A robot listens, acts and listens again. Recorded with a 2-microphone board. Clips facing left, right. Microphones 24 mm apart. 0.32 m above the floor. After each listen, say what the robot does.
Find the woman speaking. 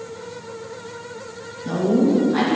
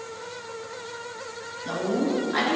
Turn 30° right.
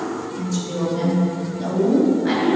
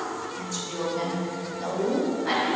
Turn 25° left.
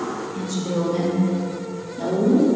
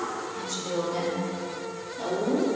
Facing the woman speaking, over 4 m away.